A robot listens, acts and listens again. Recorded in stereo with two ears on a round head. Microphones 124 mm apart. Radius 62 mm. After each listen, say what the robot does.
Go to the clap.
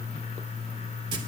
Keep listening.
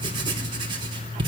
Keep listening.
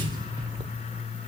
I can't make out a clap to turn to.